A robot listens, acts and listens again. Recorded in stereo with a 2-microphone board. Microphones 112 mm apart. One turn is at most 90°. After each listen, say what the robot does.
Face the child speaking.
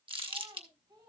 Turn 35° right.
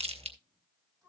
Found it: a child speaking, straight ahead.